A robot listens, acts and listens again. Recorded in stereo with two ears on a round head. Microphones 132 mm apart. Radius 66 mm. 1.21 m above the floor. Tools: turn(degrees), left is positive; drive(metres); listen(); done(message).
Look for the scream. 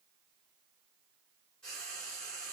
listen()
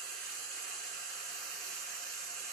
listen()
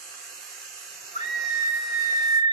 turn(degrees=45)
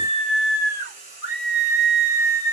turn(degrees=90)
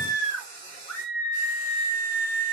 turn(degrees=15)
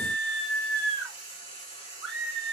done("Found it: a scream, straight ahead.")